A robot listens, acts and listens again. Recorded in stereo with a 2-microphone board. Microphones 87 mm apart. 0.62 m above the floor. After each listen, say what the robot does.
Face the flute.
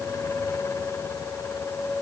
Keep listening.
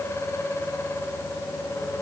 Keep listening.
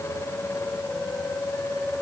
I can't make out a flute.